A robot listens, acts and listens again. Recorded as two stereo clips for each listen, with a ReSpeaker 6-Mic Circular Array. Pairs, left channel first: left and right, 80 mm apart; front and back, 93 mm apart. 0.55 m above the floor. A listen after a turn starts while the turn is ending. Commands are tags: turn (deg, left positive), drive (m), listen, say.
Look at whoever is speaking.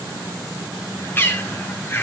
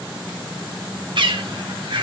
<listen/>
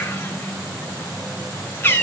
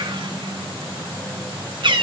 <listen/>
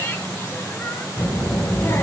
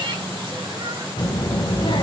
<turn deg="30"/>
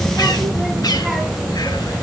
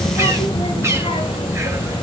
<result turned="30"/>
<say>Found it: a child speaking, straight ahead.</say>